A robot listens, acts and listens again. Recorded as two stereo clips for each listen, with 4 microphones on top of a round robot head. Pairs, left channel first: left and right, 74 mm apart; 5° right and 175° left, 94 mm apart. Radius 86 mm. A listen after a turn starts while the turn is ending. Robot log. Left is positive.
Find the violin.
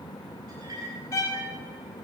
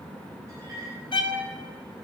note: The violin: 35° left.
cmd yaw +35
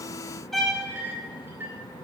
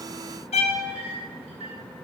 end: Found it: a violin, straight ahead, 1 to 2 m away.